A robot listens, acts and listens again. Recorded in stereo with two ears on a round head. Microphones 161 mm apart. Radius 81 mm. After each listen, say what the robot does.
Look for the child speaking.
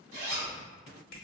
Keep listening.
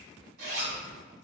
Keep listening.
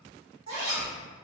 Turn 30° right.
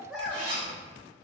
Facing the child speaking.